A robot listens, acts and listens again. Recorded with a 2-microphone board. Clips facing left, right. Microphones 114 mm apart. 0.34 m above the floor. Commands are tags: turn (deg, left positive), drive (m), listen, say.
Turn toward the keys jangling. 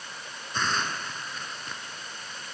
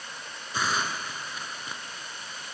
<listen/>
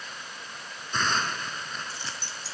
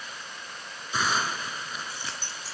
<turn deg="-45"/>
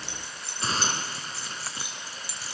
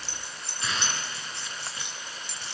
<say>Facing the keys jangling, over 4 m away.</say>